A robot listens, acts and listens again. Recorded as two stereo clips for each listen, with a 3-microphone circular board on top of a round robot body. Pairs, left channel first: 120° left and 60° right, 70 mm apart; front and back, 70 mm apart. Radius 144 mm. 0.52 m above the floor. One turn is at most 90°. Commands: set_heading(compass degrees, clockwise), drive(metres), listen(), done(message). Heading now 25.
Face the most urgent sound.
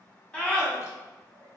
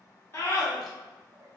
set_heading(340)
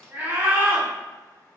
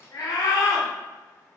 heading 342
done("Facing the scream.")